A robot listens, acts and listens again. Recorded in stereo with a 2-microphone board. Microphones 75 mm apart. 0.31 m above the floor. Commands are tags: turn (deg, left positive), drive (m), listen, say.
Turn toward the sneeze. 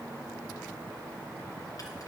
<listen/>
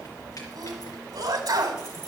<turn deg="-60"/>
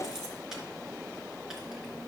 <listen/>
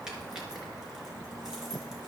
<say>I heard a sneeze, but can't make it out now. It was about straight ahead or 60° right.</say>